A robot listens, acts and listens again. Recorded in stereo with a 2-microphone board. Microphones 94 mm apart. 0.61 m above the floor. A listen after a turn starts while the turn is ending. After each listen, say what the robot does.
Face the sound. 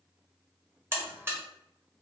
Turn 25° right.
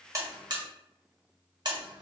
Turn 130° right.
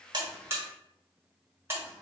Turn 30° right.
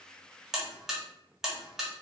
Found it: a buzzer, straight ahead.